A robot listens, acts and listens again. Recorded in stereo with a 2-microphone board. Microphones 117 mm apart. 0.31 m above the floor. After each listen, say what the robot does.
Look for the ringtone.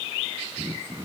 Keep listening.
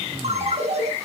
Turn 65° right.
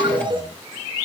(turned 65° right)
Turn 45° right.
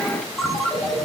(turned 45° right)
Found it: a ringtone, straight ahead, 2 to 4 m away.